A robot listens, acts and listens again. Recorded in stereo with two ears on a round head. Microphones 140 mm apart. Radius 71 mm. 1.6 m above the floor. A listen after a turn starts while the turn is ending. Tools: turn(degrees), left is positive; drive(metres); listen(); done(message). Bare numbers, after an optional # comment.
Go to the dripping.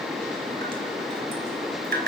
# The dripping: about 60° right or 120° right.
turn(-60)
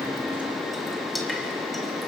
listen()
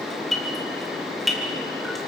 drive(1.0)
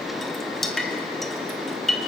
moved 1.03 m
drive(1.0)
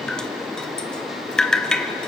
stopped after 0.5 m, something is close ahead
done("Arrived at the dripping, straight ahead.")